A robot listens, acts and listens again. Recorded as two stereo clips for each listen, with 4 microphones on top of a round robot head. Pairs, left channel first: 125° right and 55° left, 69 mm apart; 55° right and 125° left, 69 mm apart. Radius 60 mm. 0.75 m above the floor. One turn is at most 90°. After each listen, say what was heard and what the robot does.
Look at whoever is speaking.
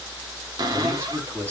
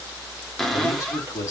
Found it: a man speaking, straight ahead.